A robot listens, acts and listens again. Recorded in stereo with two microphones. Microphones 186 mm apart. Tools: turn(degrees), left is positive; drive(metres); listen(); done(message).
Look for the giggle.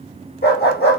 listen()
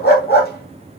listen()
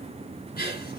turn(degrees=55)
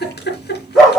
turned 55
turn(degrees=65)
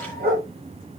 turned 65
listen()
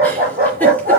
listen()
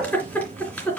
turn(degrees=10)
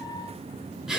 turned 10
done("Facing the giggle, 2 to 4 m away.")